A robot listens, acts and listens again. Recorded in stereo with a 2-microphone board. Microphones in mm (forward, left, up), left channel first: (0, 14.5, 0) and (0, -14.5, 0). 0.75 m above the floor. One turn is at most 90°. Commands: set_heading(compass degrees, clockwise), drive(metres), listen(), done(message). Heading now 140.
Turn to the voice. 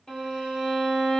listen()
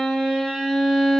listen()
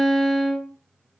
done("I can't make out anyone speaking, only a violin.")